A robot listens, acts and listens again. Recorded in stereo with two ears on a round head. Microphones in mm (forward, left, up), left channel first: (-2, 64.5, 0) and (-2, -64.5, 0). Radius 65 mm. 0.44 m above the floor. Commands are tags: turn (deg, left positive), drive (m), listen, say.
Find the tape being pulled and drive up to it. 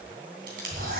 <turn deg="-70"/>
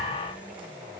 <listen/>
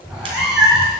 <listen/>
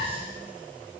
<say>I heard tape being pulled, but can't make it out now. It was about straight ahead or 40° right. I did not reach it.</say>